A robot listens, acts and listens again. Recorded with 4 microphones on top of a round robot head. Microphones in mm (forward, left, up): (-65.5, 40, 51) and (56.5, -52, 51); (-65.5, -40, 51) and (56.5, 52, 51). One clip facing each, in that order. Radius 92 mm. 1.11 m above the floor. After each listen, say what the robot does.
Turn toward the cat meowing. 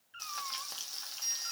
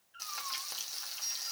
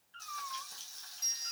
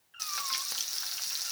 Turn 110° left.
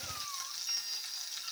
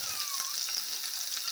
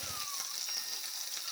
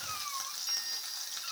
Keep listening.
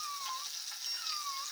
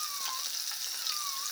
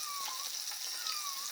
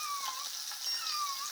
Keep listening.
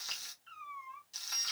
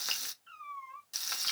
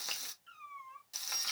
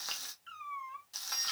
Turn 70° left.
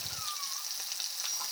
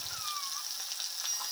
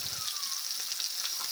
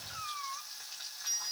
Keep listening.
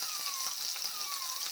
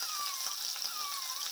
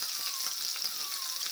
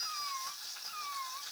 Keep listening.
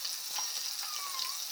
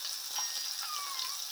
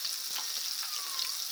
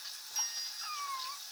Facing where the cat meowing came from. I can't hear it now.